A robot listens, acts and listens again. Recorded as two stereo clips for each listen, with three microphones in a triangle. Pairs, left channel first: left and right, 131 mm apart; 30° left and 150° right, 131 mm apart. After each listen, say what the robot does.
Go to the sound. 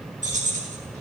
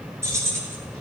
Turn 80° right.
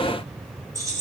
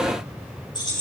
Turn 25° right.
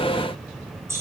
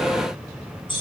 Turn 20° right.
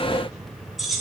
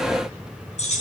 Drive 1.0 m forward.
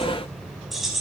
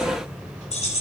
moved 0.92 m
Drive 1.0 m forward.
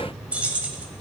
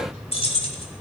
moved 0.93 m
Turn 10° right.
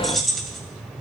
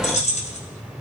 Drive 1.0 m forward.
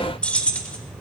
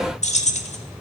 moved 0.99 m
Turn 10° left.
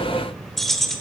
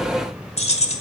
Drive 1.0 m forward.
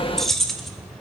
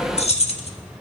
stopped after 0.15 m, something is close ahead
I am next to the keys jangling.